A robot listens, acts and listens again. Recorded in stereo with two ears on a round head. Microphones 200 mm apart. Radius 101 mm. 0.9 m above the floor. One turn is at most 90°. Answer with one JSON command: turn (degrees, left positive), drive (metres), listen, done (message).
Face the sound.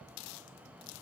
{"listen": true}
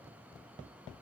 {"listen": true}
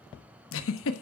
{"turn": 65}
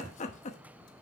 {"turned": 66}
{"turn": 35}
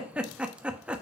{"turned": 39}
{"done": "Found it: a giggle, straight ahead, 1 to 2 m away."}